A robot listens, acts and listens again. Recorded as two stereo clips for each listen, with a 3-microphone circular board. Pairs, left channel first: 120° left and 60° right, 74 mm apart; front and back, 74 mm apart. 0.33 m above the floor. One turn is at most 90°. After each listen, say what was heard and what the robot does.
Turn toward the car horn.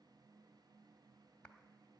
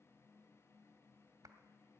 Keep listening.
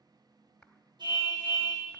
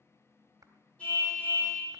The car horn: 75° right. Turn 75° right.
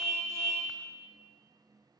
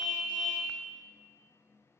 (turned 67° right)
Facing the car horn.